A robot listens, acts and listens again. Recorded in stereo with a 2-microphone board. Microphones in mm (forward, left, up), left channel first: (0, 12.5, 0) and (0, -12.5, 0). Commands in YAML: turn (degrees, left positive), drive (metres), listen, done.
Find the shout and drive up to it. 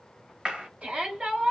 turn: -55
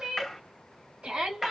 turn: -65
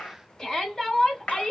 turn: 15
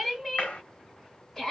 drive: 1.0
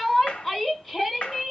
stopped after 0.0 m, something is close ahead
done: "Something is in my way. I am facing the shout but have not reached it."